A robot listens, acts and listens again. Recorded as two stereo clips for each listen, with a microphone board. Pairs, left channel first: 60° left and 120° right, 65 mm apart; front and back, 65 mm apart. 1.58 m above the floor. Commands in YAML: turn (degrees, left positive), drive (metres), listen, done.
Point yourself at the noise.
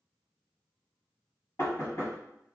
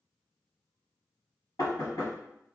turn: 15
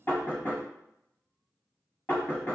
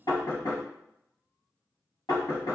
done: "Facing the knocking."